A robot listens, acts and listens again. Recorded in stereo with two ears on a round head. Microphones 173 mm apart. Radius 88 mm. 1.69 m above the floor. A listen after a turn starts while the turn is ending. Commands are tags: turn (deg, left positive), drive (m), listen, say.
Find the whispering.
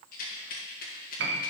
<listen/>
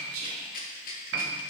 <turn deg="-90"/>
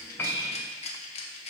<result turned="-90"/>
<listen/>
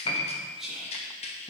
<say>Facing the whispering.</say>